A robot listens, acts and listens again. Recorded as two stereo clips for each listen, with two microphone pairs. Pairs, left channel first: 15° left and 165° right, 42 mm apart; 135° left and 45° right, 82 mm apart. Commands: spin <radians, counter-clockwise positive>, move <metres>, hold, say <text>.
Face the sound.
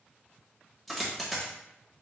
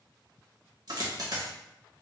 spin -1.22
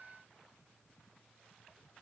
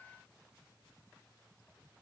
say I heard a dropped coin from this way, but can't make it out now.